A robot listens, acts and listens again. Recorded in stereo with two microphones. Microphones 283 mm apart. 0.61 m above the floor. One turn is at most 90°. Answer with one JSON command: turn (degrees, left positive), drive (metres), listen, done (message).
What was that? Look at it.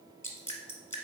{"turn": 30}
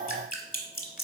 {"turn": 90}
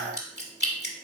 {"turn": 45}
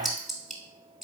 {"done": "Found it: dripping, straight ahead, under 1 m away."}